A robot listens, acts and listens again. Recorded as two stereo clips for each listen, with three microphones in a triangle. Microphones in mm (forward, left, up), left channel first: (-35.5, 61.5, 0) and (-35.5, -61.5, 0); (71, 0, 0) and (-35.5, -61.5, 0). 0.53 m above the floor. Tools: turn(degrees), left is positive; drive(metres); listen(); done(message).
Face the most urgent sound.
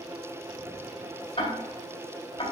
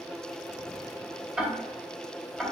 listen()
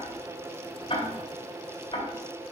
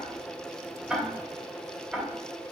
listen()
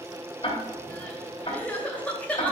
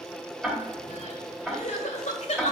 turn(degrees=10)
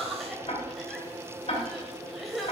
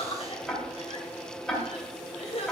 done("Facing the crying.")